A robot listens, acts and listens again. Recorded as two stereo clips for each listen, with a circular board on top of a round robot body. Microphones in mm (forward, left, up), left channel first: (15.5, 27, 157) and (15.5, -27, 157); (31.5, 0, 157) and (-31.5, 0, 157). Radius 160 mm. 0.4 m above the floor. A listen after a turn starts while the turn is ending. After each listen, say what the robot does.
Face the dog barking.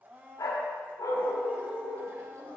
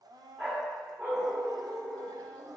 Turn 115° left.
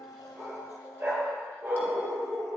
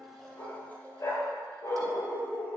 Turn 20° right.
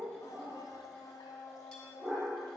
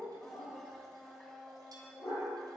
Facing the dog barking.